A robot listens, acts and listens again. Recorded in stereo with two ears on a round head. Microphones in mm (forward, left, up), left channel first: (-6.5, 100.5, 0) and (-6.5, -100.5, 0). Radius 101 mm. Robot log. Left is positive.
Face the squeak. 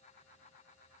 cmd idle
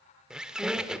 cmd yaw -30
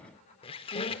note: So it is at 25° left.
cmd yaw +25
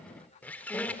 end: Found it: a squeak, straight ahead.